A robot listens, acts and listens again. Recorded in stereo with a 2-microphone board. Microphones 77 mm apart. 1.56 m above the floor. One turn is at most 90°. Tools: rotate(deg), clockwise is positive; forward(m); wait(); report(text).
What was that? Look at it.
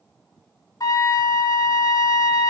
rotate(-45)
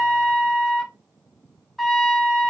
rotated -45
report("Facing the trumpet.")